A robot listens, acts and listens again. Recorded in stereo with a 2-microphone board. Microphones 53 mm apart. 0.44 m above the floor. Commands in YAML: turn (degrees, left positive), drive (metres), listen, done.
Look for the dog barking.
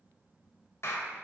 listen: true
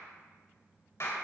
listen: true
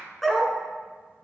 turn: 30
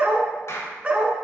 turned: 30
turn: -25
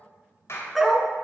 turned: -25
done: "Facing the dog barking, 1 to 2 m away."